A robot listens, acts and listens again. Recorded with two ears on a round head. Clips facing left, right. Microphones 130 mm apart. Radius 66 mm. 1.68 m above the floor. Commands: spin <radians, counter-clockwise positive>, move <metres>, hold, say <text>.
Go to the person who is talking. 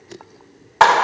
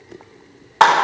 hold
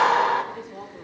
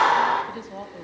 spin -0.79
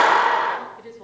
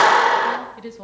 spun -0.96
spin -1.40
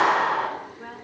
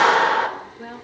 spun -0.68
spin -0.70
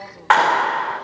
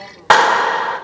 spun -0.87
spin 0.17
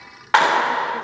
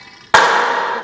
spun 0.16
hold
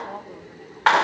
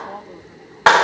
say I heard a woman speaking from this way, but can't make it out now. I did not reach it.